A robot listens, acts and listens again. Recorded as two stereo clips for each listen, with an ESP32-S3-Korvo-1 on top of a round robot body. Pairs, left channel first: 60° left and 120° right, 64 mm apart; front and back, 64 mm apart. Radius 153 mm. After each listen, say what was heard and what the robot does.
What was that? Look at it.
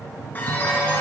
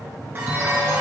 The chime: 120° left. Turn 120° left.
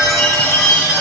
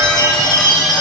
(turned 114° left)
Found it: a chime, straight ahead.